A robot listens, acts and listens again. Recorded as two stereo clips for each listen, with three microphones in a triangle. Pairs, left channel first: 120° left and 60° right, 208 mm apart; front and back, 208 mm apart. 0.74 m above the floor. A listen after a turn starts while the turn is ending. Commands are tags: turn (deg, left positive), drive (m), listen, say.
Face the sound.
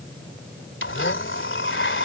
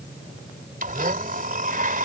<turn deg="135"/>
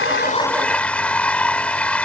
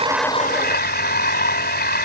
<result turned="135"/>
<turn deg="35"/>
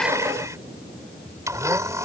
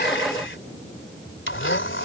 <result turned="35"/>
<turn deg="15"/>
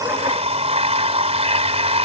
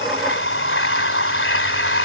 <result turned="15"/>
<say>Found it: a blender, straight ahead.</say>